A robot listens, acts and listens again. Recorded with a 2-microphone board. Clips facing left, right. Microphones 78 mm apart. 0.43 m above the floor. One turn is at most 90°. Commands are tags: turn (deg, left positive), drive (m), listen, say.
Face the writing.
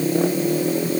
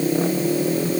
<listen/>
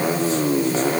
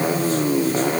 <listen/>
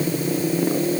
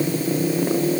<say>I can't make out writing.</say>